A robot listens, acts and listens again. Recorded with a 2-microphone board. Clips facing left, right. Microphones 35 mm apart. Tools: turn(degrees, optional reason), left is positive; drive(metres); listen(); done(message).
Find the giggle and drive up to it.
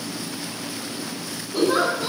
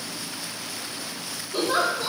turn(degrees=-90)
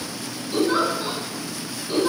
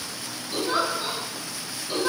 drive(metres=1.0)
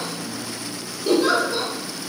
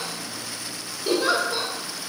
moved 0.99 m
drive(metres=1.0)
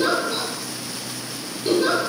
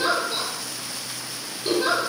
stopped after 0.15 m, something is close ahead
done("I am next to the giggle.")